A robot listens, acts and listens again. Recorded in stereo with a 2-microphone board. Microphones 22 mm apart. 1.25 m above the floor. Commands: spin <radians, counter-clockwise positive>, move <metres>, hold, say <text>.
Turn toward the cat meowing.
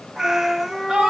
spin -0.44
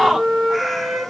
say Facing the cat meowing.